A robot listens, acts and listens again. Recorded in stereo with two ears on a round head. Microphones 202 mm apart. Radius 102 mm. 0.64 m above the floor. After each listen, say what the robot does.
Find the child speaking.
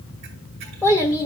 Turn 20° left.
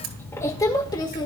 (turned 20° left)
Turn 25° left.
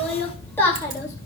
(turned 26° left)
Turn 30° left.
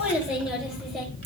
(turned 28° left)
Found it: a child speaking, straight ahead.